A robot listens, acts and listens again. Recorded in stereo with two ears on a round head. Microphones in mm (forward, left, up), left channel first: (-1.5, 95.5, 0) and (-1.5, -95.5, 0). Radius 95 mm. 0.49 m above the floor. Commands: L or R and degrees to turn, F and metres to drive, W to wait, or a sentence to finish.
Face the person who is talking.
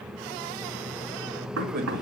R45
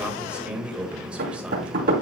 Facing the man speaking.